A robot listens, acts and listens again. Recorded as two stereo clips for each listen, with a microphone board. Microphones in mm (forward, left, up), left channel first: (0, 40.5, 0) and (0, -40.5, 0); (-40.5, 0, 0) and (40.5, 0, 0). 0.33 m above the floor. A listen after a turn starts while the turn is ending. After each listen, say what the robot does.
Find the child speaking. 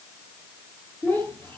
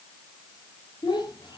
Turn 155° left.
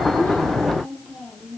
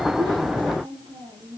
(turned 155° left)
Found it: a child speaking, straight ahead.